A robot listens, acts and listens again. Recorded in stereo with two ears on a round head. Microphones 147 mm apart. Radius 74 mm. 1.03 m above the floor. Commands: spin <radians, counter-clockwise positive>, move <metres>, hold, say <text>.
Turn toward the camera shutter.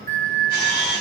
spin 1.05
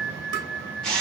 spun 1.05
say Found it: a camera shutter, straight ahead, 1 to 2 m away.